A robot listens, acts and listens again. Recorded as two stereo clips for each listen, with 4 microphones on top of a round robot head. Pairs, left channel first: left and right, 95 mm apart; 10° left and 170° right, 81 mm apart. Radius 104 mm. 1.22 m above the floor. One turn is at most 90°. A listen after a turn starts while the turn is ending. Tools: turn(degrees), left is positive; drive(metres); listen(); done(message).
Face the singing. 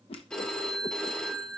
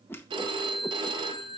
listen()
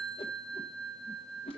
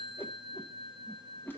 listen()
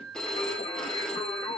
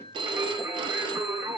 turn(degrees=90)
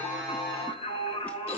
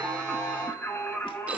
turn(degrees=75)
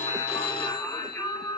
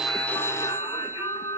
turn(degrees=25)
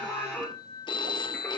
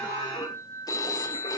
turn(degrees=10)
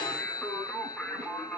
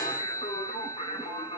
done("Found it: singing, straight ahead, 1 to 2 m away.")